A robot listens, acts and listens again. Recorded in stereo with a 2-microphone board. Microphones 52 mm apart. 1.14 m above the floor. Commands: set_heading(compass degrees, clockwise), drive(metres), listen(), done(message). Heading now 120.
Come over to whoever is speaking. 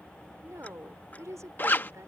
set_heading(210)
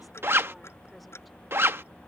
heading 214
listen()
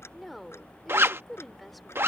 drive(1.0)
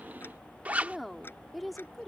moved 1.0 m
drive(1.0)
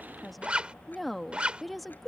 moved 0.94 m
drive(1.0)
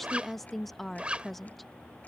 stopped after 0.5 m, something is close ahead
done("I am next to the woman speaking.")